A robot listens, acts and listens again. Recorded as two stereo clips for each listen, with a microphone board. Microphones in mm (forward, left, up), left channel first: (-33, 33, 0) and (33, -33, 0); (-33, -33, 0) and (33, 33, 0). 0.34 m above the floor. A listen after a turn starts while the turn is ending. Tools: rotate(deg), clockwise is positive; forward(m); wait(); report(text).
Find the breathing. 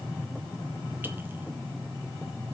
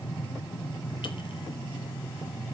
wait()
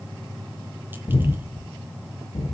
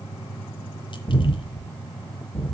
rotate(-155)
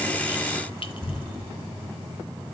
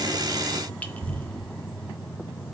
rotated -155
rotate(-55)
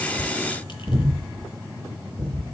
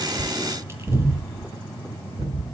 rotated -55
rotate(-10)
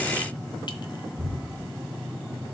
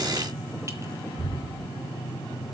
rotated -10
report("Found it: breathing, straight ahead.")